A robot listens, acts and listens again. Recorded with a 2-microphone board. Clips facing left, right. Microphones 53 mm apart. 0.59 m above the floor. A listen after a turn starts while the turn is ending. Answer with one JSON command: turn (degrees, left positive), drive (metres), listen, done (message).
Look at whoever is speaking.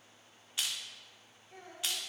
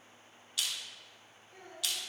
{"turn": 70}
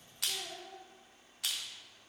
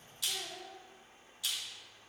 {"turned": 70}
{"done": "Found it: a child speaking, straight ahead, 1 to 2 m away."}